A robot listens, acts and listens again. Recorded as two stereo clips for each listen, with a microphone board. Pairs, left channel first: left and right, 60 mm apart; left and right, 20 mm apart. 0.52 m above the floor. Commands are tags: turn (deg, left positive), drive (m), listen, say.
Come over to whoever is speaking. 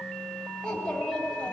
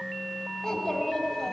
<turn deg="15"/>
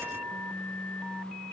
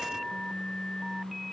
<listen/>
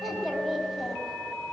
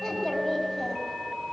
<drive m="1.0"/>
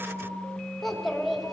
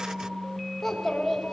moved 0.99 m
<drive m="1.0"/>
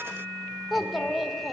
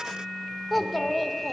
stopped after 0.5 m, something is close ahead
<say>I am next to the child speaking.</say>